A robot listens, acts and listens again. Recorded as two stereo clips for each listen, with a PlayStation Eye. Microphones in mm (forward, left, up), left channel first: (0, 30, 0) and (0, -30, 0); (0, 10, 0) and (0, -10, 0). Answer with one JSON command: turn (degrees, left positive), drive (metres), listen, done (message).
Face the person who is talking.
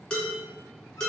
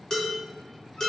{"listen": true}
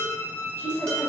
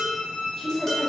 {"turn": 45}
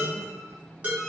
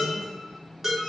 {"listen": true}
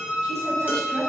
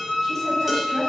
{"turn": 10}
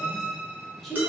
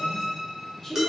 {"done": "Facing the woman speaking."}